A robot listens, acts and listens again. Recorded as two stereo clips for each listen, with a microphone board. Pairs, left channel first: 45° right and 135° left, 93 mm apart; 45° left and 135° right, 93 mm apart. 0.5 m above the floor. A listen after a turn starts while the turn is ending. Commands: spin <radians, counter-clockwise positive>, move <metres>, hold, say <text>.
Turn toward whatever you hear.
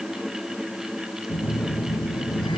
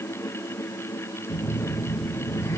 spin -0.17
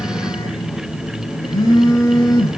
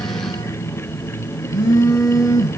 say Facing the phone buzzing, 2 to 4 m away.